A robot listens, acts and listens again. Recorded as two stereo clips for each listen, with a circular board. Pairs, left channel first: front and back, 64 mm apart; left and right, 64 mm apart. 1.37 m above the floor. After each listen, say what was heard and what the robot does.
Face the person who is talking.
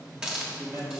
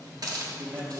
The man speaking: 145° right. Turn 145° right.
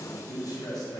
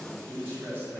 The man speaking is now 30° right. Turn 30° right.
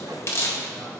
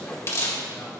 Keep listening.
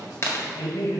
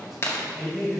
Facing the man speaking.